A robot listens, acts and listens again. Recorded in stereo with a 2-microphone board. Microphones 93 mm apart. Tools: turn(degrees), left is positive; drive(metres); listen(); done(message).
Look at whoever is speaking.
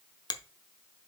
listen()
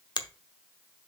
listen()
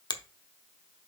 done("I can't make out anyone speaking, only a finger snap.")